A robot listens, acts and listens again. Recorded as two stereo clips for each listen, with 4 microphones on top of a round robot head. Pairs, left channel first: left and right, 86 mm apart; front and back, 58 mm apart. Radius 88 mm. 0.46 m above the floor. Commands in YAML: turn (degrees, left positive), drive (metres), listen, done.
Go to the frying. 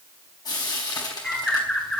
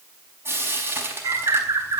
turn: 135
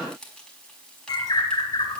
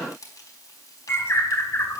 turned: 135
turn: 10
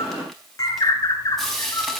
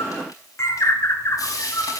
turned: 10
drive: 1.0
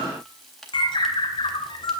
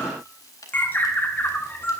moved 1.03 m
listen: true
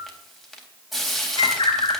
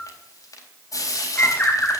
drive: 1.0
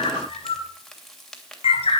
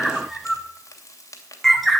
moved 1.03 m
drive: 1.0
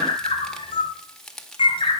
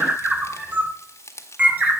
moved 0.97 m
turn: 10
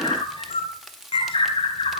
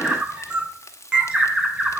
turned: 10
listen: true
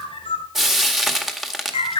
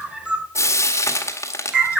drive: 1.0
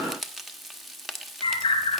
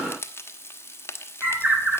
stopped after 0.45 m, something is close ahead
done: "I am next to the frying."